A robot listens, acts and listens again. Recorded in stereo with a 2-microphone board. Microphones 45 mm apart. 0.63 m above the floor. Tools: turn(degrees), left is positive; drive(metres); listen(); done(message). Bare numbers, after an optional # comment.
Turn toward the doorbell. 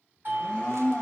# The doorbell: about 40° right or 140° right.
turn(-40)
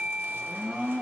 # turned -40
done("Facing the doorbell, 1 to 2 m away.")